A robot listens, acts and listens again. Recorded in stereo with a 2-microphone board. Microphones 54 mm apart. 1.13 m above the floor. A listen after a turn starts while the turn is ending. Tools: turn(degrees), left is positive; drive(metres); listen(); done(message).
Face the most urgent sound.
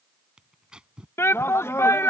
turn(degrees=55)
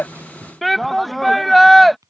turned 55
done("Facing the shout.")